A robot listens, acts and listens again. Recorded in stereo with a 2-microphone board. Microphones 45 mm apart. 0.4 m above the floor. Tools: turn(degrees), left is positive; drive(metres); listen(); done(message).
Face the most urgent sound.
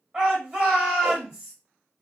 turn(degrees=-20)
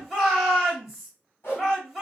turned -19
done("Facing the shout, 1 to 2 m away.")